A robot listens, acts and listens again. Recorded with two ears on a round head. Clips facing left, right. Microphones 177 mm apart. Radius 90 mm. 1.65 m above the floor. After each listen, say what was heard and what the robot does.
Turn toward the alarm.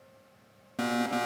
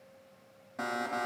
The alarm: about 40° left or 140° left. Turn 40° left.
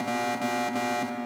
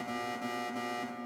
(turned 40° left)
So it is at 100° left. Turn 100° left.
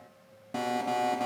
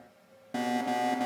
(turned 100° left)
Found it: an alarm, straight ahead, under 1 m away.